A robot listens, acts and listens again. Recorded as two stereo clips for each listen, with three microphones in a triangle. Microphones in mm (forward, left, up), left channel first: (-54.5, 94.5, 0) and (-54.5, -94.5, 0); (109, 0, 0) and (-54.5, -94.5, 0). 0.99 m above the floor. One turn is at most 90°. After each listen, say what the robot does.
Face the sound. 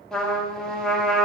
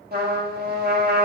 Turn 90° left.
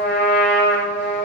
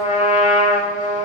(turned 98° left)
Turn 80° left.
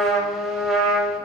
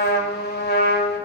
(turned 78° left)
Found it: a trumpet, straight ahead.